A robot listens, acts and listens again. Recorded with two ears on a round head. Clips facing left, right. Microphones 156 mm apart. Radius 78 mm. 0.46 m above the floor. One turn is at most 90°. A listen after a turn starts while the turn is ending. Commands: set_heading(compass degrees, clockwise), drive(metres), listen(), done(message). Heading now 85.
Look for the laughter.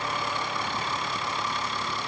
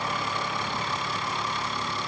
listen()
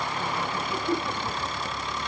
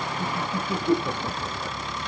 set_heading(140)
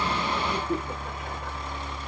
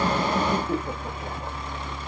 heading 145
set_heading(180)
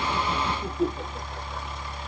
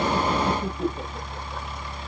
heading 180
done("Found it: laughter, straight ahead, 1 to 2 m away.")